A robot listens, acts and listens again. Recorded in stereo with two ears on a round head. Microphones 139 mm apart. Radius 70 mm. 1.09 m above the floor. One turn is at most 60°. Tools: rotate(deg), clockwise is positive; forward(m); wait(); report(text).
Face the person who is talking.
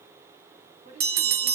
rotate(45)
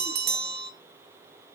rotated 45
wait()
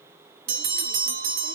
wait()
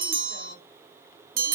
report("I heard a woman speaking, but can't make it out now. It was about straight ahead or 90° right.")